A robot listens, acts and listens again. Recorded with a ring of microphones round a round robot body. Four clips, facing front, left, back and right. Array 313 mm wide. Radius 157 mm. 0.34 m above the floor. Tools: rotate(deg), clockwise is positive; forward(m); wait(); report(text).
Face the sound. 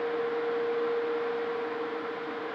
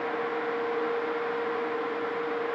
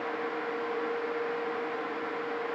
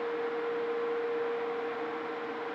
wait()
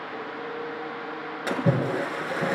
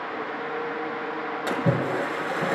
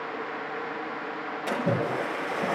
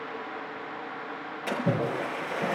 rotate(-40)
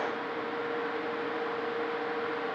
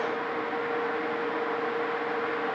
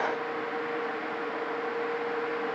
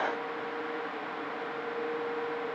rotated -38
report("I heard a splash from this way, but can't make it out now.")